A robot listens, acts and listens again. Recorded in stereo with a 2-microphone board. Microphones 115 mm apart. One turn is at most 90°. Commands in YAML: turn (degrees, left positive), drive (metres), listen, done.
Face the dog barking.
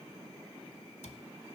listen: true
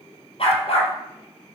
turn: 55
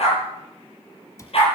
turn: 55
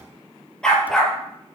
done: "Facing the dog barking."